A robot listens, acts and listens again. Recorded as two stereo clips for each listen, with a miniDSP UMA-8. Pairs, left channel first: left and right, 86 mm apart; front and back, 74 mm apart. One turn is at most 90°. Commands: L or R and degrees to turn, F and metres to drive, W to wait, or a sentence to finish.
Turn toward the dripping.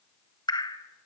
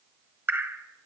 L90
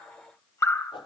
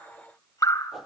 L35
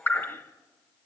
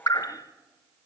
L25
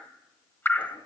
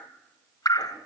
L25
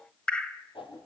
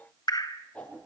L15
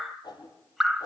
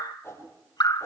Facing the dripping, 1 to 2 m away.